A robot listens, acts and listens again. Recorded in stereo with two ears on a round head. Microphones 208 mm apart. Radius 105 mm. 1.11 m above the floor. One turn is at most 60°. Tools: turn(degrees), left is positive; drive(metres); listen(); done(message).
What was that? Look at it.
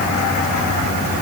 listen()
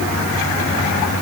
listen()
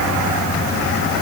done("I can't make out anything to turn to.")